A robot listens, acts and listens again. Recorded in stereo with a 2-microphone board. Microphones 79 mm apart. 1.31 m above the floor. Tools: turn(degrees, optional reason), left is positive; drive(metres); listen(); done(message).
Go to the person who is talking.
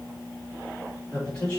turn(degrees=30)
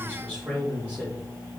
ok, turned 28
turn(degrees=-15, reason="So it is at 15° right.")
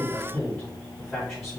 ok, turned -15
drive(metres=1.0)
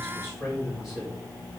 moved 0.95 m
drive(metres=1.0)
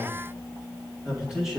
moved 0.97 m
drive(metres=1.0)
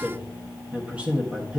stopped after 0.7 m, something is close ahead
turn(degrees=-20, reason="The man speaking is now 20° right.")
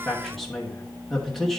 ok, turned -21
done("Arrived at the man speaking, straight ahead.")